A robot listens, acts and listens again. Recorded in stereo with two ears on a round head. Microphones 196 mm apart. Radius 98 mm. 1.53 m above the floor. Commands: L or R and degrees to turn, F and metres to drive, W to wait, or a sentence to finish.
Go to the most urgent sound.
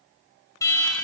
L15
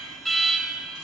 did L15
F1.0
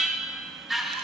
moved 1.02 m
F1.0
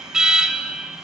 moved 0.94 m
F1.0
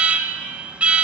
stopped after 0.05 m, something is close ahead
I am next to the alarm.